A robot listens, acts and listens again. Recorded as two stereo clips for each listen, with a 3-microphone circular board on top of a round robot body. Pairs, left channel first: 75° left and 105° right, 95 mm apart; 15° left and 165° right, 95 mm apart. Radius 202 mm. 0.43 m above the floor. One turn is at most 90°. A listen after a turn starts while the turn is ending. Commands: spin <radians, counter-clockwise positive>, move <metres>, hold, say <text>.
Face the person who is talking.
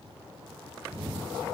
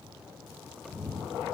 hold
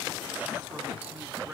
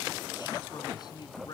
spin -0.52
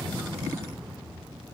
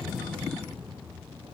hold
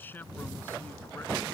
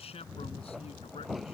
say Facing the man speaking.